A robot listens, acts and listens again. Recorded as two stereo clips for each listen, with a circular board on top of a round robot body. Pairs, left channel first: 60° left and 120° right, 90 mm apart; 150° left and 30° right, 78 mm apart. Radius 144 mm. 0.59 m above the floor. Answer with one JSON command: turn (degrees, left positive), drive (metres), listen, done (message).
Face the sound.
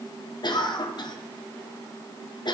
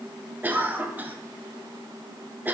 {"turn": 35}
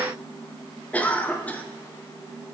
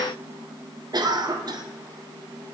{"turn": -10}
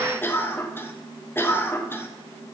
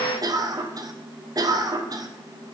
{"done": "Facing the cough, 1 to 2 m away."}